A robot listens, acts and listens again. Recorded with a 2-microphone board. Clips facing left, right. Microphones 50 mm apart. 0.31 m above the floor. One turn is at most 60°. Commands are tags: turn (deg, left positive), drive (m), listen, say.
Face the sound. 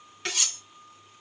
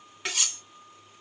<turn deg="-30"/>
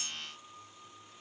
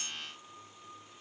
<listen/>
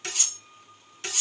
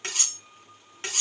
<turn deg="-60"/>
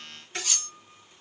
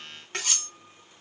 <turn deg="-60"/>
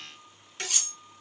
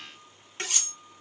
<turn deg="-40"/>
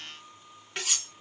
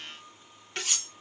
<say>Found it: cutlery clinking, straight ahead.</say>